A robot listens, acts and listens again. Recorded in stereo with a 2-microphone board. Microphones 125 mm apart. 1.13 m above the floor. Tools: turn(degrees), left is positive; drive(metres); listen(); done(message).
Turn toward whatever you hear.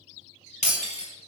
turn(degrees=90)
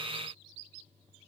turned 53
turn(degrees=35)
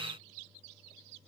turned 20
turn(degrees=15)
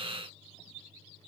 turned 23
done("I heard breaking glass from this way, but can't make it out now.")